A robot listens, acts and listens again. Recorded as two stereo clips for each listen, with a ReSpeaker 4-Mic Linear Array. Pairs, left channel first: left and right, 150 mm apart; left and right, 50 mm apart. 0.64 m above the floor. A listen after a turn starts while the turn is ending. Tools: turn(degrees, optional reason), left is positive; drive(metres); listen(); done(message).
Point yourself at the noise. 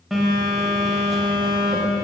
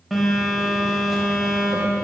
turn(degrees=30)
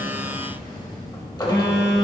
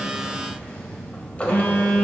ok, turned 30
turn(degrees=150, reason="So it is at 150° left.")
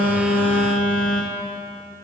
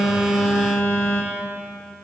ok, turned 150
turn(degrees=65, reason="The phone buzzing is now 65° left.")
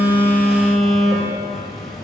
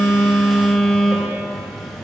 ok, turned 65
done("Found it: a phone buzzing, straight ahead, under 1 m away.")